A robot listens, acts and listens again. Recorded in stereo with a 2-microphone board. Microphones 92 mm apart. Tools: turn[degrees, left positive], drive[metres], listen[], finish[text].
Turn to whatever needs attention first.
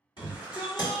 Thought: The shout: about 55° left or 125° left.
Action: turn[55]
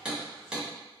Action: listen[]
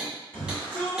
Thought: So it is at 30° left.
Action: turn[30]
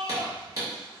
Action: finish[Facing the shout, 2 to 4 m away.]